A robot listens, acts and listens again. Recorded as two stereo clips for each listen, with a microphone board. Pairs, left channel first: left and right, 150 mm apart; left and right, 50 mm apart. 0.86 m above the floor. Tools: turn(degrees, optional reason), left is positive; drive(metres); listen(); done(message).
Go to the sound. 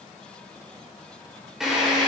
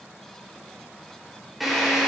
turn(degrees=-30)
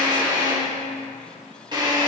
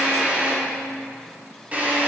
turn(degrees=-150, reason="So it is at 150° right.")
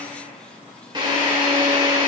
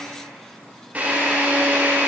turn(degrees=-35, reason="The drill is now 35° right.")
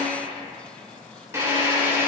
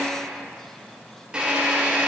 turn(degrees=-20, reason="The drill is now 20° right.")
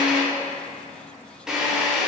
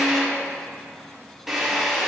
drive(metres=1.0)
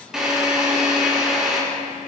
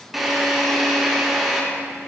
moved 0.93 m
drive(metres=1.0)
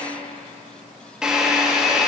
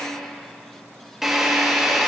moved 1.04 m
drive(metres=1.0)
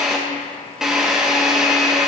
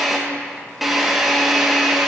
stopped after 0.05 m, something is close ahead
done("I am next to the drill.")